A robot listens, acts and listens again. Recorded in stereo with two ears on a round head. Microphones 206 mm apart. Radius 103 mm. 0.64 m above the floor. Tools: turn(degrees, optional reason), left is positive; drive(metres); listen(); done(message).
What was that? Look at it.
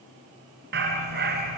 turn(degrees=-45, reason="The dog barking: about 45° right or 135° right.")
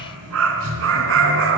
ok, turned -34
turn(degrees=-125, reason="So it is at 125° right.")
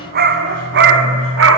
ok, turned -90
turn(degrees=-60, reason="The dog barking is now 60° right.")
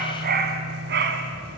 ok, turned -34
turn(degrees=-45, reason="The dog barking is now 45° right.")
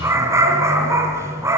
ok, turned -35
turn(degrees=-15, reason="The dog barking is now 15° right.")
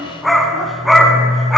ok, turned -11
done("Found it: a dog barking, straight ahead, 1 to 2 m away.")